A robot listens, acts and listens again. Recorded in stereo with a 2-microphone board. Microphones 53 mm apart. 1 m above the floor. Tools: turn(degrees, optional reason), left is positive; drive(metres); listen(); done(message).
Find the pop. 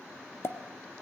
turn(degrees=50, reason="The pop: about 50° left or 130° left.")
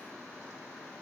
listen()
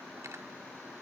done("I heard a pop, but can't make it out now. It was about straight ahead or 80° left.")